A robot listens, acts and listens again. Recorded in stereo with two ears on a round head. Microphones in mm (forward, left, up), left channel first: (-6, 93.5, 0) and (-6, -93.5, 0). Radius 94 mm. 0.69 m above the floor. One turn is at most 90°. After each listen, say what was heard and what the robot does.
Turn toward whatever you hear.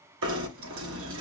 The knocking: about 70° right or 110° right. Turn 70° right.
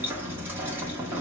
So it is at 10° right. Turn 10° right.
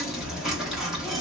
Facing the knocking, under 1 m away.